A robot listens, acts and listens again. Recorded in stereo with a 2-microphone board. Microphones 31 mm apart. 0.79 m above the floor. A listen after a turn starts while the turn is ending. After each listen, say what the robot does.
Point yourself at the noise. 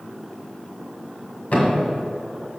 Turn 55° left.
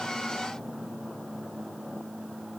Keep listening.
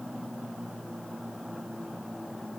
I heard a thud, but can't make it out now. It was about straight ahead or 70° left.